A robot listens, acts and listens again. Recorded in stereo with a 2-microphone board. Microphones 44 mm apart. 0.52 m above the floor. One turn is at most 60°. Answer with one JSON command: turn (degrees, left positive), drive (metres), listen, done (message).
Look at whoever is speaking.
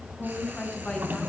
{"turn": 25}
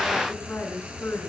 {"turn": 60}
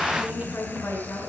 {"turn": 60}
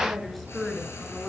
{"done": "Found it: a woman speaking, straight ahead, over 4 m away."}